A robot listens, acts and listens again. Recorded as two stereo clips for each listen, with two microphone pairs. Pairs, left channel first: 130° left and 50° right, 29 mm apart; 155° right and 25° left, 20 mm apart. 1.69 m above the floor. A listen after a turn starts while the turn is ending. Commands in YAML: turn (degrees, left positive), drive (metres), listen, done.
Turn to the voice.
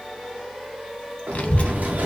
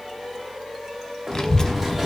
turn: 150
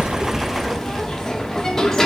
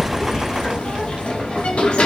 turn: 50
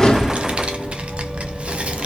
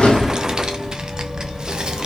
turn: -20
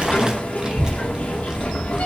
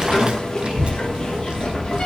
done: "Found it: a child speaking, straight ahead."